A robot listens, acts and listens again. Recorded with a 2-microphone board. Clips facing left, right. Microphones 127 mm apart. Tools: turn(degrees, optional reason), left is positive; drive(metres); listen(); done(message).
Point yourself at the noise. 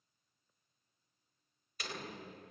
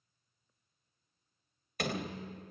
turn(degrees=-65, reason="The door slam: about 65° right or 115° right.")
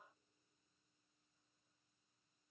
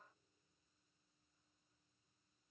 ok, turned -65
listen()
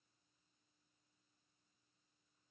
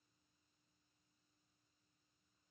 done("I heard a door slam, but can't make it out now. It was about straight ahead or 50° right.")